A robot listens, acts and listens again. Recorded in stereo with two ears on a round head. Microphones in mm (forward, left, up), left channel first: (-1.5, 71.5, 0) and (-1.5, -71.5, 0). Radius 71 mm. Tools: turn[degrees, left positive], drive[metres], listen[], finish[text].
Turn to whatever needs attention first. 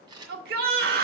Thought: The shout: about 65° right or 115° right.
Action: turn[-65]
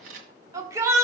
Thought: So it is at 20° right.
Action: turn[-20]
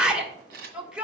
Action: finish[Facing the shout.]